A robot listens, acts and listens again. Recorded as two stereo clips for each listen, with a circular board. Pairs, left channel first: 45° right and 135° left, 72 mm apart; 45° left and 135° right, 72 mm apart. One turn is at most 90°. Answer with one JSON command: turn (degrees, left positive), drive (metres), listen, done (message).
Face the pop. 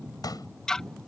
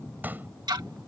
{"turn": -70}
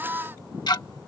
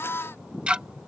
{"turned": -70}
{"done": "Facing where the pop came from. I can't hear it now."}